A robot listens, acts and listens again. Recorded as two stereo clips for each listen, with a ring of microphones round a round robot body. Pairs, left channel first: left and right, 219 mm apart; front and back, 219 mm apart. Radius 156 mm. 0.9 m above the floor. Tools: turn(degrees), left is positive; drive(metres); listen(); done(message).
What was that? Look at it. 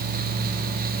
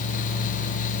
listen()
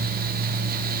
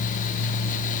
listen()
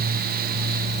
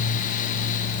done("I can't make out anything to turn to.")